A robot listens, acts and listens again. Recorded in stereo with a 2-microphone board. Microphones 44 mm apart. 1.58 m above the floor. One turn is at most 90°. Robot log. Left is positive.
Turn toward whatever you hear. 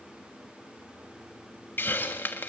note: The hiss: about 55° left or 125° left.
cmd yaw +55
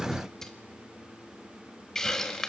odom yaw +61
note: So it is at 15° left.
cmd yaw +15
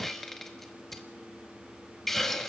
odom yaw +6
note: The hiss is now 10° left.
cmd yaw +10
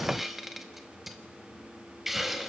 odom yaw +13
end: Found it: a hiss, straight ahead.